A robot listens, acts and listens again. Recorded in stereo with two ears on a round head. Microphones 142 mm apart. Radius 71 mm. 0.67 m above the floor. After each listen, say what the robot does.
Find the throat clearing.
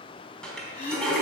Turn 50° left.
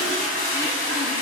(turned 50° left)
Keep listening.
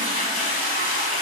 Keep listening.
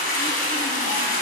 I heard throat clearing, but can't make it out now. It was about straight ahead or 80° left.